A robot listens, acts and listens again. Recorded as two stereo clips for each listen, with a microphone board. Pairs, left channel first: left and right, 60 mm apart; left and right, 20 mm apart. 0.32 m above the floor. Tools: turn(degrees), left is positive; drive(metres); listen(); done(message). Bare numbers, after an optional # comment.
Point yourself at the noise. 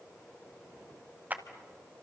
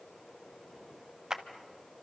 # The clap: about 30° right or 150° right.
turn(-30)
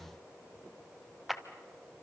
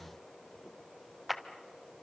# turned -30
done("Found it: a clap, straight ahead, 1 to 2 m away.")